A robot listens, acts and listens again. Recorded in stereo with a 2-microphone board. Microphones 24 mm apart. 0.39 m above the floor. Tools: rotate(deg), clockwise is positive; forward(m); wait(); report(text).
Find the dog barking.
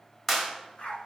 rotate(-50)
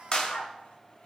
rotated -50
rotate(-85)
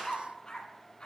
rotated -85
rotate(-40)
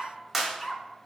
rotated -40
report("Found it: a dog barking, straight ahead.")